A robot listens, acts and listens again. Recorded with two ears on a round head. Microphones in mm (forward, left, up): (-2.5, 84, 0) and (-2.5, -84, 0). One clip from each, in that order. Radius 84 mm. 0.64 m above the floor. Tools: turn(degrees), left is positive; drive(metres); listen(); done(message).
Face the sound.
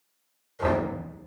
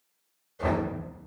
turn(degrees=45)
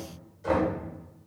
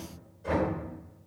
turn(degrees=85)
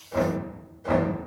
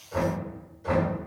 done("Found it: knocking, straight ahead, 1 to 2 m away.")